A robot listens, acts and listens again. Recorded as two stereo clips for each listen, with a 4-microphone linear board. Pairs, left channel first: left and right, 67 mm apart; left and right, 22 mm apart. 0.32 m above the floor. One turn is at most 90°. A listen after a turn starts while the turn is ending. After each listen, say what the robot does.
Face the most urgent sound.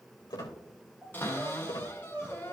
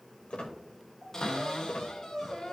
Turn 15° right.
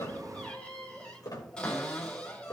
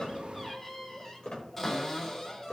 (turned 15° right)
Keep listening.
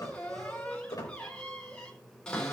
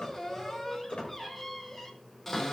Found it: crying, straight ahead.